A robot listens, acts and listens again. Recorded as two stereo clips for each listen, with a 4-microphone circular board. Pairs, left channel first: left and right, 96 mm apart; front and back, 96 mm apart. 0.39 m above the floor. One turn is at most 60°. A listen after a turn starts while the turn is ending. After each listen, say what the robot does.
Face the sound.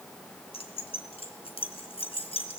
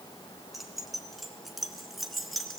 Turn 60° left.
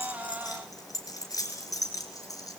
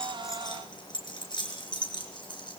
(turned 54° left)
Turn 35° left.
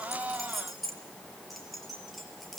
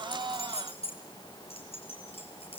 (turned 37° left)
Found it: keys jangling, straight ahead, over 4 m away.